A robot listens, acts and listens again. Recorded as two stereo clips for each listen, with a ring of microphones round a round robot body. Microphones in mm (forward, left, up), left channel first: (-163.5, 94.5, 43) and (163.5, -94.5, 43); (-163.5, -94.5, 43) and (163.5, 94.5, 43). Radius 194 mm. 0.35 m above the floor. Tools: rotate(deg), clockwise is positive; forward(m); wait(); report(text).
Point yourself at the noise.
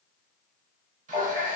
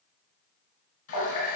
rotate(100)
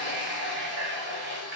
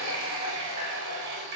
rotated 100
rotate(-30)
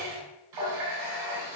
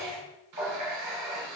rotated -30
rotate(15)
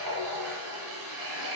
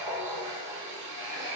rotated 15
report("Facing the running tap, 1 to 2 m away.")